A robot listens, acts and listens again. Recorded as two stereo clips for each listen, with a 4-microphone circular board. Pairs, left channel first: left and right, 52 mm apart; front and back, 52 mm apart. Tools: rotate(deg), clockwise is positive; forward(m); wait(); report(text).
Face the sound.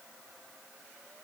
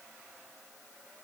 wait()
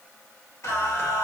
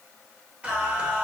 rotate(-110)
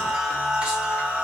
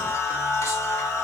rotate(25)
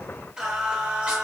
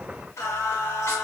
rotate(25)
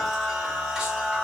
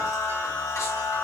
rotate(20)
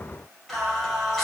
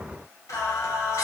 report("Found it: singing, straight ahead.")